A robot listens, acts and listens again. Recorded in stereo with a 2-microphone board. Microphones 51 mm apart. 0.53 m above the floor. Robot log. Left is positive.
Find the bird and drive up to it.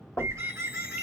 note: The bird: about 75° right or 105° right.
cmd yaw -75
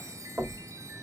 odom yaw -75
cmd idle
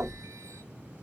cmd idle
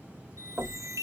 end: I heard a bird, but can't make it out now. It was about straight ahead or 30° right. I did not reach it.